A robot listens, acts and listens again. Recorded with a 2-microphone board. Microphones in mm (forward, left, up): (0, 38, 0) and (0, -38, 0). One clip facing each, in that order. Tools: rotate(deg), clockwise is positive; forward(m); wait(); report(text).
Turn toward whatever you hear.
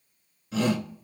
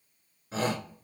rotate(35)
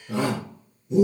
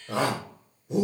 rotate(110)
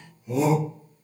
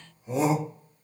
rotate(30)
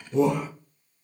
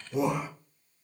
rotate(10)
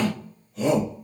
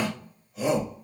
report("Found it: a shout, straight ahead.")